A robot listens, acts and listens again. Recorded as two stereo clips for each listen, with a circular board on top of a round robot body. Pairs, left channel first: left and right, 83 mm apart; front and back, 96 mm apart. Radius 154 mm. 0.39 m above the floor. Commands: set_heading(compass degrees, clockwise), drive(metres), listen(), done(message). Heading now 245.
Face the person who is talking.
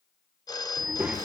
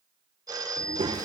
set_heading(45)
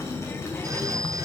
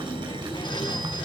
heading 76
set_heading(46)
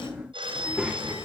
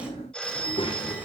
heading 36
set_heading(46)
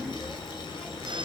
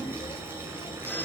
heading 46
done("Found it: a child speaking, straight ahead, 1 to 2 m away.")